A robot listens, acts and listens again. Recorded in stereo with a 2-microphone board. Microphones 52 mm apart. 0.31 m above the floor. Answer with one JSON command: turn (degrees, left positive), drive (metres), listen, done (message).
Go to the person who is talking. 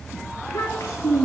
{"turn": 75}
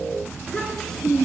{"turn": 10}
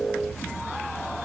{"listen": true}
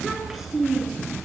{"drive": 1.0}
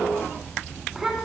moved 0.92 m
{"turn": -10}
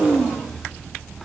{"drive": 1.0}
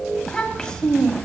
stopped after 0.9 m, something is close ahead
{"turn": 20}
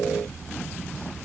{"listen": true}
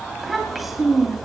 {"done": "I am next to the child speaking."}